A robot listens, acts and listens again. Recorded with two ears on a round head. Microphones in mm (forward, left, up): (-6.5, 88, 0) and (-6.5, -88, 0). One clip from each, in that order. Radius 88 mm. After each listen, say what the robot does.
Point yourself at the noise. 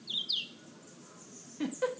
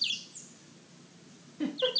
Turn 20° left.
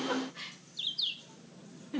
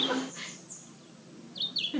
Facing the giggle, under 1 m away.